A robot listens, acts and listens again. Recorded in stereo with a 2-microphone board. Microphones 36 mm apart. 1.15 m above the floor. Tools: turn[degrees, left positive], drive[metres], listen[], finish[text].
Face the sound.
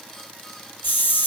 Thought: The hiss: about 60° left or 120° left.
Action: turn[60]
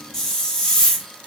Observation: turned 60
Thought: So it is at 15° left.
Action: turn[15]
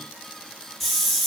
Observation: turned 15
Action: finish[Found it: a hiss, straight ahead, 1 to 2 m away.]